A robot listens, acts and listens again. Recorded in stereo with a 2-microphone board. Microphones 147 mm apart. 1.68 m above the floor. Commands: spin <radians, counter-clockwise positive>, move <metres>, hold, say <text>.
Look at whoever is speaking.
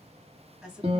spin -0.52
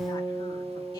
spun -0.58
hold
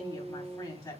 spin 0.52
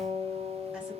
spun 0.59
hold
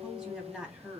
say Found it: a woman speaking, straight ahead, 2 to 4 m away.